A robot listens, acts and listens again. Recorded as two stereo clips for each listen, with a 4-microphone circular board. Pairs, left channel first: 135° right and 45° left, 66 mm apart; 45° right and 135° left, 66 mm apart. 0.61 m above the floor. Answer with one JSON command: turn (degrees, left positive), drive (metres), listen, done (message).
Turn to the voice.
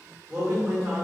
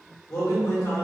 {"turn": -30}
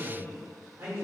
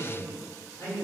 {"done": "Found it: a man speaking, straight ahead."}